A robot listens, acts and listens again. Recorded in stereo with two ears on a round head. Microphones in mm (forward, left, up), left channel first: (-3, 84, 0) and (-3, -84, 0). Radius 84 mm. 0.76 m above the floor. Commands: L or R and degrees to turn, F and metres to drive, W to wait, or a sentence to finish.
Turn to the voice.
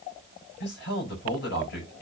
L60
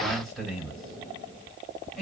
Found it: a man speaking, straight ahead.